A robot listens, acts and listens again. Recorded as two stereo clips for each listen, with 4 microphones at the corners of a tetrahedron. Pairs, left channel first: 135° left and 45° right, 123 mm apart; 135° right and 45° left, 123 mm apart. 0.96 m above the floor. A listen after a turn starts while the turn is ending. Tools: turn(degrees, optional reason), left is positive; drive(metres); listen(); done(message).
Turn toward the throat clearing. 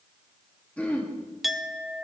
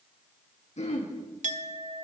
turn(degrees=-150, reason="The throat clearing: 150° right.")
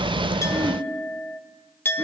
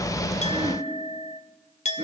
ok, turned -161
turn(degrees=15, reason="Nothing new. It was at 15° left.")
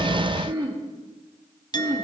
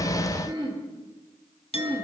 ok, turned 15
done("Facing the throat clearing.")